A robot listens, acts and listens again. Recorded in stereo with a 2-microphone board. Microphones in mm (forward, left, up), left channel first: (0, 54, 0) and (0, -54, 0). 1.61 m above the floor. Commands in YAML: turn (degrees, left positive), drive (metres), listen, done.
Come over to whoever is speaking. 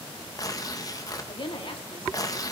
turn: 50
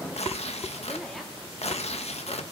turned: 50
listen: true
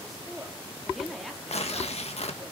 drive: 1.0
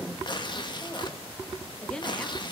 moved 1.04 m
turn: 10
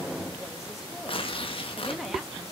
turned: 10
listen: true
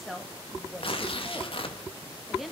drive: 1.0
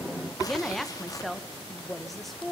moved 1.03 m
drive: 1.0
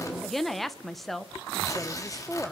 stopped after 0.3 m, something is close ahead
done: "Arrived at the woman speaking, straight ahead."